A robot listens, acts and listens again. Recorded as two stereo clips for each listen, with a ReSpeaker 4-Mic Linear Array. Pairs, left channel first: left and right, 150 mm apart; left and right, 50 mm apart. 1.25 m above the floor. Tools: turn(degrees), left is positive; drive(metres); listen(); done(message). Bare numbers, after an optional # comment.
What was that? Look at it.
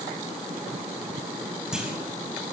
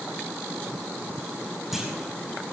turn(-30)
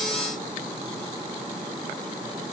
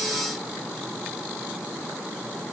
listen()
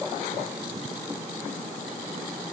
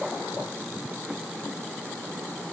done("I heard a clunk, but can't make it out now. It was about 25° left or 145° right.")